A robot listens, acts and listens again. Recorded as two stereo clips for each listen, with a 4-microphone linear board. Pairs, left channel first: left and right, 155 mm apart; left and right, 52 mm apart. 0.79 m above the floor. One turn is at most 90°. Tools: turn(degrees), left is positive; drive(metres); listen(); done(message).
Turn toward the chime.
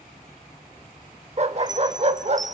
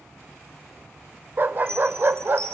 turn(degrees=-55)
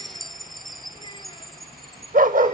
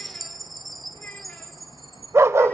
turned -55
done("Found it: a chime, straight ahead, under 1 m away.")